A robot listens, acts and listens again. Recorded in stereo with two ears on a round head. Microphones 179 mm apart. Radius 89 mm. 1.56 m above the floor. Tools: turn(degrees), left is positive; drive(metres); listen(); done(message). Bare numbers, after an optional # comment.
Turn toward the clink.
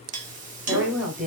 # The clink: about 40° right or 140° right.
turn(-40)
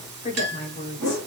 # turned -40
# So it is at 90° right.
turn(-90)
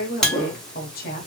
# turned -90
done("Found it: a clink, straight ahead.")